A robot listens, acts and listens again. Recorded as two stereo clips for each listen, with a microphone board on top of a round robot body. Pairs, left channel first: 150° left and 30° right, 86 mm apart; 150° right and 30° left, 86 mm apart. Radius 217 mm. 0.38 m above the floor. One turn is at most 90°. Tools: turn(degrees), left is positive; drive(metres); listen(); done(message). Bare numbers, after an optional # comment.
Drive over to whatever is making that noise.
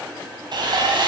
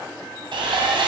drive(1.0)
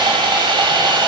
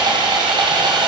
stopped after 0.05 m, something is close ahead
done("Blocked. The sawing is further on, straight ahead.")